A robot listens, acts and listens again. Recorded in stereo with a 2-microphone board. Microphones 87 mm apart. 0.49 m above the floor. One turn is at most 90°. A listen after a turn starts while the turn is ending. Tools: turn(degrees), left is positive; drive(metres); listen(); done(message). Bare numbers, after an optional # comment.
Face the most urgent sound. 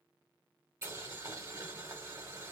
listen()
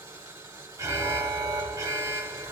# The alarm: about 40° right or 140° right.
turn(-40)
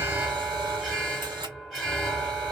done("Facing the alarm, under 1 m away.")